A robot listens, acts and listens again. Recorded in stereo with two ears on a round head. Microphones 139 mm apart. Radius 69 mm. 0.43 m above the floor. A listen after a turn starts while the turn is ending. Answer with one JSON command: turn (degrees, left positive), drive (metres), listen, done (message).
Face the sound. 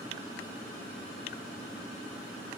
{"listen": true}
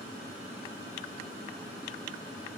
{"listen": true}
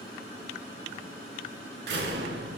{"turn": -90}
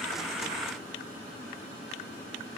{"done": "Facing where the door slam came from. I can't hear it now."}